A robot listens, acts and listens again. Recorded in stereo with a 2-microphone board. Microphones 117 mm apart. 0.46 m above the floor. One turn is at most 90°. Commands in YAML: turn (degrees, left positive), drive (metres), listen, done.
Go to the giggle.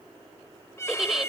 turn: -30
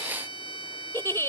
turn: 25
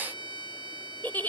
turn: 20
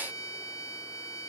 listen: true
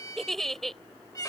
drive: 1.0
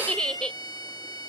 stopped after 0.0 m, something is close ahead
turn: 10
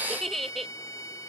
done: "Something is in my way. I am facing the giggle but have not reached it."